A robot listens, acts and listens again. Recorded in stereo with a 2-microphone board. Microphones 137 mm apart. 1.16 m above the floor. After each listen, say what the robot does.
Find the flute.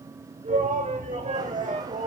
Turn 50° right.
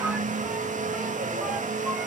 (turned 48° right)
Keep listening.
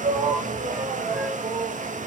Keep listening.
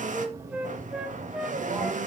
Facing the flute.